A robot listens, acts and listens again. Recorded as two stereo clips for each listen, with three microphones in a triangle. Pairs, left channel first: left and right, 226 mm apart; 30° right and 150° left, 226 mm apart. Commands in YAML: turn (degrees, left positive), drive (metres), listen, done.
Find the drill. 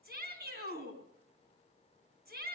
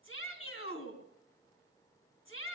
listen: true
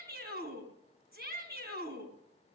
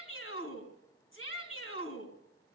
listen: true
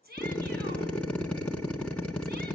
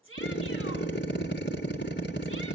done: "Found it: a drill, straight ahead."